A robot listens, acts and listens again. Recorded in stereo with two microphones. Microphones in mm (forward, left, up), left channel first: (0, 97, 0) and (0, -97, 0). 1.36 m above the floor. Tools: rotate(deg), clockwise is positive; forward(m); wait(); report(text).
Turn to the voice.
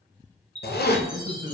rotate(50)
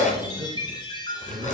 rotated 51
rotate(80)
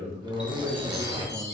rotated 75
report("Found it: a man speaking, straight ahead, 1 to 2 m away.")